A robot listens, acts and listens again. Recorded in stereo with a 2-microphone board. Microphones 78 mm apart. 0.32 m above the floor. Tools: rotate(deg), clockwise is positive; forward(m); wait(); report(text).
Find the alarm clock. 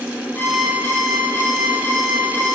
rotate(-20)
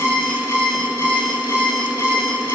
rotate(-140)
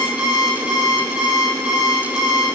rotate(10)
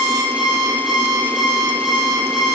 report("Found it: an alarm clock, straight ahead.")